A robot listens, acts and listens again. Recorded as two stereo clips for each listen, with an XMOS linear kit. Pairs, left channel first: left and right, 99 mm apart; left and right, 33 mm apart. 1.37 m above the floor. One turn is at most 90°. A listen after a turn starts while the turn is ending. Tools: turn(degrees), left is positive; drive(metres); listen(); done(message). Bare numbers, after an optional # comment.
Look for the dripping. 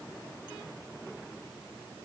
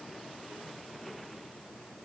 listen()
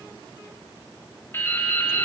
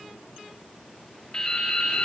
# The dripping: about 25° left or 155° left.
turn(25)
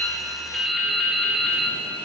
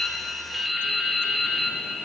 done("Found it: dripping, straight ahead, 2 to 4 m away.")